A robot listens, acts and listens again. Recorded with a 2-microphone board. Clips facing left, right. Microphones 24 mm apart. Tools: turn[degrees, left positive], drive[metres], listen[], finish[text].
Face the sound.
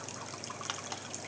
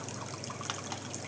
Action: listen[]
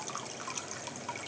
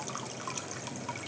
Action: listen[]
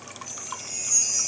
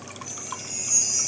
Thought: The chime: about 30° right or 150° right.
Action: turn[-30]
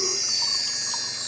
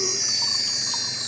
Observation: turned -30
Thought: So it is at 115° right.
Action: turn[-115]
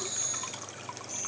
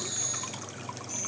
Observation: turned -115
Action: listen[]
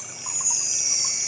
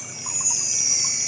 Thought: The chime is now 25° right.
Action: turn[-25]
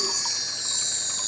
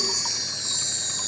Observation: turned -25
Action: finish[Found it: a chime, straight ahead.]